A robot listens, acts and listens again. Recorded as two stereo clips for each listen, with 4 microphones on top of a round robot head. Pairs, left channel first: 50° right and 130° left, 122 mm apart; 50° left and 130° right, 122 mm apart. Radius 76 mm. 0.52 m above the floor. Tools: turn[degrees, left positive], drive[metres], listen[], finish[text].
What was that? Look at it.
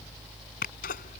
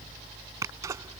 Thought: The sneeze: 65° right.
Action: turn[-65]
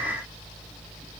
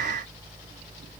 Action: finish[I heard a sneeze from this way, but can't make it out now.]